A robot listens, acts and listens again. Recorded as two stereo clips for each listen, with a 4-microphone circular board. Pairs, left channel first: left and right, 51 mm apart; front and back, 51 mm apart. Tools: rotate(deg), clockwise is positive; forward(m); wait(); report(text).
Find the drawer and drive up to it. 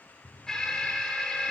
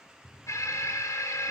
rotate(-170)
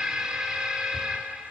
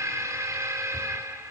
wait()
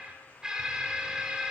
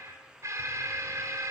wait()
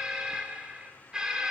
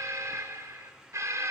report("I heard a drawer from this way, but can't make it out now. I did not reach it.")